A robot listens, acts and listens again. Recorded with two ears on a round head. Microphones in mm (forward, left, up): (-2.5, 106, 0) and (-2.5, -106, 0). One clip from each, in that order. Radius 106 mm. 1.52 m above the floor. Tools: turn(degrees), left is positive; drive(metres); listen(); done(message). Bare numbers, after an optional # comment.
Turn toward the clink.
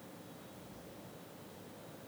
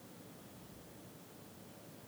listen()
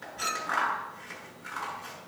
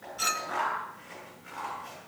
turn(-30)
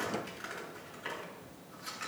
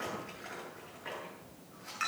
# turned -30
# So it is at 135° right.
turn(-135)
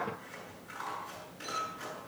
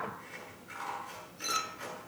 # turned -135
# The clink is now 50° right.
turn(-50)
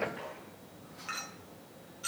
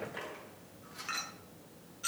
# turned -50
done("Found it: a clink, straight ahead.")